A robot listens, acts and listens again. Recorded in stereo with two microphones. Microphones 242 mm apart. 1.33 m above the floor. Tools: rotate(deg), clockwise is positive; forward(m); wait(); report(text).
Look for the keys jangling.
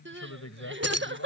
rotate(90)
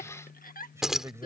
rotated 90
report("Facing the keys jangling.")